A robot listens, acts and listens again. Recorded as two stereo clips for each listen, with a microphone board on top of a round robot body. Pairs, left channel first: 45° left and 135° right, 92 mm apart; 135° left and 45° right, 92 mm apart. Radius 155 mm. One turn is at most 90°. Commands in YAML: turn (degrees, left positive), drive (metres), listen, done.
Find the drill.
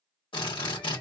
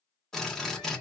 turn: 50
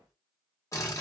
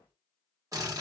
done: "Found it: a drill, straight ahead, 1 to 2 m away."